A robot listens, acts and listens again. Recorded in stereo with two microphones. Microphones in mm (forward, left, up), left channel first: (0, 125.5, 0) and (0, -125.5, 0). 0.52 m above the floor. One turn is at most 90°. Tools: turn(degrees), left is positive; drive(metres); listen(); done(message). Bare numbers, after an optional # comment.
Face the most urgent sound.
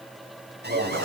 # The alarm: about 40° right or 140° right.
turn(-40)
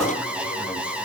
done("Found it: an alarm, straight ahead, 2 to 4 m away.")